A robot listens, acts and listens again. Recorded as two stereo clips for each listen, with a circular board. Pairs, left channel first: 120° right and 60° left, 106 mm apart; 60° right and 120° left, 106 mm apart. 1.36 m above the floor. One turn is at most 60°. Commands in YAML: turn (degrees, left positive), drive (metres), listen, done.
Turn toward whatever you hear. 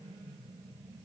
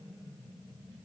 listen: true
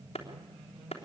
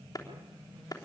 turn: -60
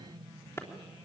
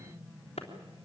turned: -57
turn: -55
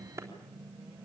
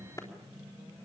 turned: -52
done: "Facing the clap, 2 to 4 m away."